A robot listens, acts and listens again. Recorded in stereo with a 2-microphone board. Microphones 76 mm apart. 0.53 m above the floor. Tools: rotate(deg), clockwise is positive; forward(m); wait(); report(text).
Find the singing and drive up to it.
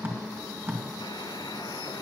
wait()
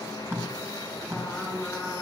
rotate(-30)
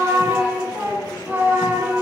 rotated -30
rotate(20)
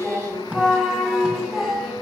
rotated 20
forward(1.0)
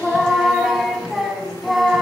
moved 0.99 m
forward(1.0)
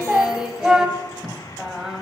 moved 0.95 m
rotate(10)
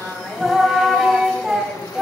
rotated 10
forward(1.0)
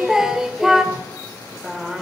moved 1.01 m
rotate(10)
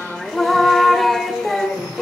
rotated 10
forward(1.0)
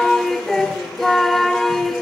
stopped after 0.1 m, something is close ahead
report("I am next to the singing.")